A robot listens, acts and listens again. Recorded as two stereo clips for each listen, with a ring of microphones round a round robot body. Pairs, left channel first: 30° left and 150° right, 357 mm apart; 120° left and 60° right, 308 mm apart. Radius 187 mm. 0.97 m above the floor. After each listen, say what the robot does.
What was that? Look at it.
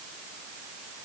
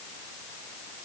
Keep listening.
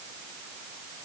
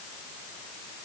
Keep listening.
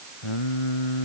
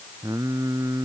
Turn 20° left.
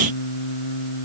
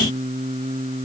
Turn 10° left.
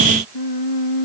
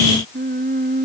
Found it: singing, straight ahead.